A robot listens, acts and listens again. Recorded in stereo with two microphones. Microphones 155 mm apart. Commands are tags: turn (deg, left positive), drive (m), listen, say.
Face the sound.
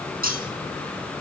<turn deg="-70"/>
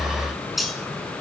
<say>Found it: cutlery clinking, straight ahead, over 4 m away.</say>